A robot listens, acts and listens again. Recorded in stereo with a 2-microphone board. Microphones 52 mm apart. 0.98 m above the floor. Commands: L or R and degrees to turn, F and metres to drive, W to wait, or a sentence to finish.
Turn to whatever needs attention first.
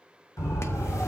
L90
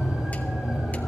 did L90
Facing the siren.